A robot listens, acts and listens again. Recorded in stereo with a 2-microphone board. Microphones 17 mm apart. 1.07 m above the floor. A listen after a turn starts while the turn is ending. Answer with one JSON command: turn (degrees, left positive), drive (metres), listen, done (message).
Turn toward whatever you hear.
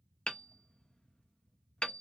{"turn": 70}
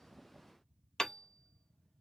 {"turn": 40}
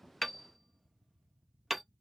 {"done": "Found it: hammering, straight ahead, under 1 m away."}